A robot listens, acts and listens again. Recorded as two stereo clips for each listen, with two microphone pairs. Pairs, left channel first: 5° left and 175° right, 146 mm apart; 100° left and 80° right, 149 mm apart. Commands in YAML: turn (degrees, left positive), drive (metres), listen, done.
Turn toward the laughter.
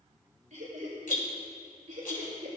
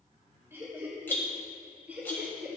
turn: -160
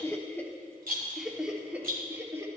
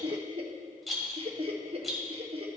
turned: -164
turn: -110
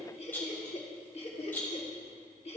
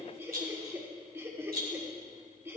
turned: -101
turn: -10
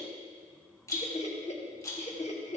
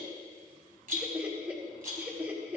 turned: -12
done: "Facing the laughter."